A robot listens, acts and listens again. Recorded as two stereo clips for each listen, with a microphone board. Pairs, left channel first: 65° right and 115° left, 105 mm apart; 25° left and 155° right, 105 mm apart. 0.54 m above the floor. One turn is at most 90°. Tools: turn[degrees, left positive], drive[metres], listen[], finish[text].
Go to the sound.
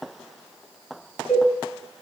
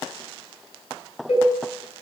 Thought: The cowbell: 20° left.
Action: turn[20]
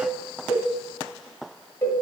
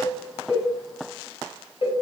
Action: drive[1.0]
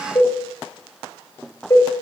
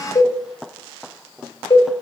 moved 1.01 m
Thought: The cowbell is now 10° right.
Action: turn[-10]
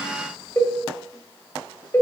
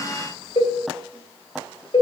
Action: drive[1.0]
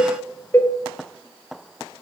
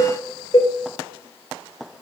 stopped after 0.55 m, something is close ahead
Action: finish[Arrived at the cowbell, straight ahead.]